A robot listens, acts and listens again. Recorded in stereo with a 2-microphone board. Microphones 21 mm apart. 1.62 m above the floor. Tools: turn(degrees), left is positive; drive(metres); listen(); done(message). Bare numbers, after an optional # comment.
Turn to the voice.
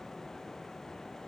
listen()
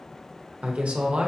# The woman speaking: about 70° right or 110° right.
turn(-70)
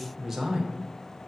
# So it is at 10° right.
turn(-10)
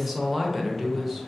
done("Facing the woman speaking.")